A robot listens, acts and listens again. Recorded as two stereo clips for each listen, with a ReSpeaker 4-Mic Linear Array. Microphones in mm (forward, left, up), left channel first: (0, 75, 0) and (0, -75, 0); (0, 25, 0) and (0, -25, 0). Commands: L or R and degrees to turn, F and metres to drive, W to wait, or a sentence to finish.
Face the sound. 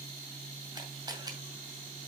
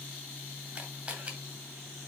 R25
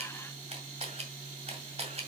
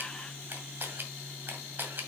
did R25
R125
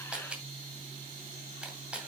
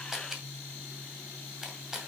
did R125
R10
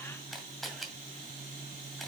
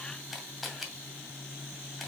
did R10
Facing the camera shutter.